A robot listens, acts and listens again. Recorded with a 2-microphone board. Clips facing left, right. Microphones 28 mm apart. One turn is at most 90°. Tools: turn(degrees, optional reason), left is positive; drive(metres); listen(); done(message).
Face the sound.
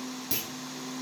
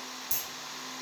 turn(degrees=55, reason="The clunk: about 55° left or 125° left.")
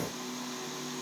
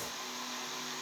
listen()
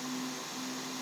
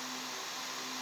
done("I heard a clunk, but can't make it out now. It was about straight ahead or 70° left.")